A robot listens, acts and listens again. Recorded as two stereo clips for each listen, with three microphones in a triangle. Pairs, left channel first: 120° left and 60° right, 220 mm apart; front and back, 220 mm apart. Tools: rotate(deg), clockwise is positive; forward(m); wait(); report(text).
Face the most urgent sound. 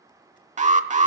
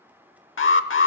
report("Facing the alarm, under 1 m away.")